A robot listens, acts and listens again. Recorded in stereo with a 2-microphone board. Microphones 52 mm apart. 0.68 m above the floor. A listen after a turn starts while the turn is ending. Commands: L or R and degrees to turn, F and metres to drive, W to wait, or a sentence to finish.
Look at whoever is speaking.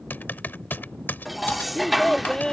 L30
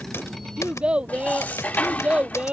R20
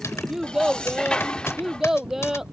R10
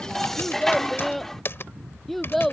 Found it: a child speaking, straight ahead.